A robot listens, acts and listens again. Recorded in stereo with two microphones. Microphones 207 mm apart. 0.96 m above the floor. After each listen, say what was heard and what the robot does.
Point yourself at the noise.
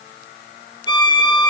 The violin: about 20° left or 160° left. Turn 20° left.
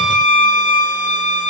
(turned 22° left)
So it is at 135° left. Turn 135° left.
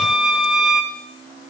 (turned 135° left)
Found it: a violin, straight ahead.